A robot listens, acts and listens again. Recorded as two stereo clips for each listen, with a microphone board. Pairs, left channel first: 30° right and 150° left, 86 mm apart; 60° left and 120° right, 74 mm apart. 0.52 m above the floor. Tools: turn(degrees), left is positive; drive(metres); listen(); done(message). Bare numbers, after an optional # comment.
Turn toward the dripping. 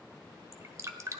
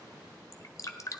# The dripping: 100° left.
turn(100)
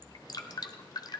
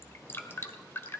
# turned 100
done("Found it: dripping, straight ahead.")